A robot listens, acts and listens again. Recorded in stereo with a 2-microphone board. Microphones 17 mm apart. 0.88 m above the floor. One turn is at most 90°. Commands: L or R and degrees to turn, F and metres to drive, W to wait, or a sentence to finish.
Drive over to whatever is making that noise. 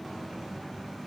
W
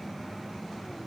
W
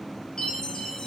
L60
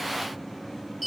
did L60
F1.0
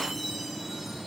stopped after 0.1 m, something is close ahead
Something is in my way. I am facing the chime but have not reached it.